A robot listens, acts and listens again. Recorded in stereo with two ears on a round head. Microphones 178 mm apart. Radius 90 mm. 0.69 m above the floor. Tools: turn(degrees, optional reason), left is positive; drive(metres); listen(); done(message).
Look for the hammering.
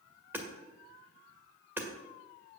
turn(degrees=-30)
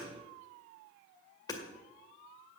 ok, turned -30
turn(degrees=20, reason="So it is at 20° left.")
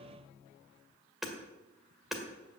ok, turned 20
done("Facing the hammering, 1 to 2 m away.")